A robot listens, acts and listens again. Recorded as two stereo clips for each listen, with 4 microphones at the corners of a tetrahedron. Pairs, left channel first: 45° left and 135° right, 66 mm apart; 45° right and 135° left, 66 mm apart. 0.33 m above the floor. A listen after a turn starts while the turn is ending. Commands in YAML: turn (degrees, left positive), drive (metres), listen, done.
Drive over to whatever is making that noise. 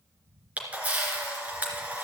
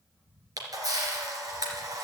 turn: 155
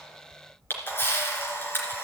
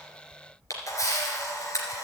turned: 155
turn: -10
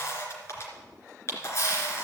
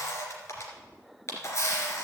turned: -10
drive: 1.0
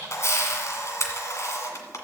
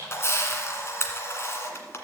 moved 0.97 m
drive: 1.0
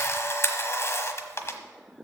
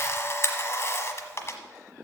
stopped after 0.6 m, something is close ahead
done: "Arrived at the camera shutter, straight ahead."